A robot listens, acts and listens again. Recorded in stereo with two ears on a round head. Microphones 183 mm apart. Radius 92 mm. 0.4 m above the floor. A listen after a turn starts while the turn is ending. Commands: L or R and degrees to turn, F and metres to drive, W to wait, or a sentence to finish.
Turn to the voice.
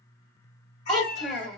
L30
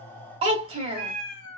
R30
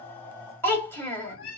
L10
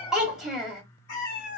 Facing the child speaking.